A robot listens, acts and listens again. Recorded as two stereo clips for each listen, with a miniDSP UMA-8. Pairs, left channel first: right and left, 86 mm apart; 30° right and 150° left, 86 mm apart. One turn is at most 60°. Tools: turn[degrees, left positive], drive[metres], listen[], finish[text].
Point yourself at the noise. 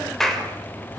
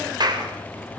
Thought: The clap: 175° right.
Action: turn[-60]
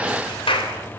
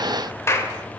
Thought: The clap is now 90° right.
Action: turn[-60]
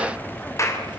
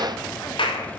Thought: The clap is now 35° right.
Action: turn[-35]
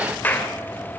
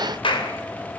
Thought: The clap is now 20° right.
Action: turn[-20]
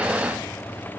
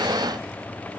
Action: listen[]
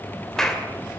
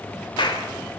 Action: finish[Facing the clap.]